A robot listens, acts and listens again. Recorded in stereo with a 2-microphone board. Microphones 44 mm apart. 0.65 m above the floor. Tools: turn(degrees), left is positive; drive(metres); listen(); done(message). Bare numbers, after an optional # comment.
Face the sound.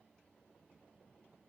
listen()
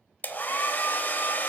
# The hair dryer: about 45° left or 135° left.
turn(45)
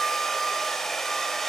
done("Found it: a hair dryer, straight ahead, under 1 m away.")